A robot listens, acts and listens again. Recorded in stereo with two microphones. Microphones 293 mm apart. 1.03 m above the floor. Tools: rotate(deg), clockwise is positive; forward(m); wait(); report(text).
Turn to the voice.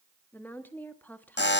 rotate(-30)
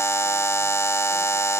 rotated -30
wait()
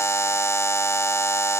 wait()
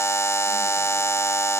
report("I heard a woman speaking, but can't make it out now. It was about 25° right or 145° left.")